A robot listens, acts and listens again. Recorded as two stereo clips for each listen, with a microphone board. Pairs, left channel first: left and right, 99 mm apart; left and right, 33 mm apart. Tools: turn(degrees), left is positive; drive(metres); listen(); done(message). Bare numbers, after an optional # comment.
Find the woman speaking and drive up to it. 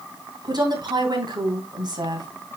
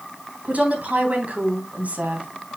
# The woman speaking: about 45° right or 135° right.
turn(-45)
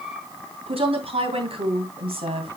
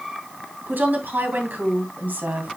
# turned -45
# So it is at 90° right.
turn(-90)
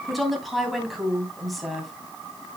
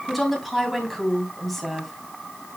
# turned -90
drive(1.0)
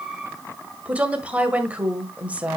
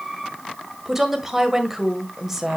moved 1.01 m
# The woman speaking is now 15° right.
turn(-15)
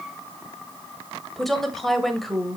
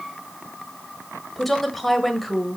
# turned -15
drive(1.0)
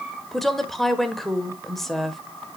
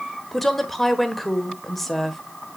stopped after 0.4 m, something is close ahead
done("I am next to the woman speaking.")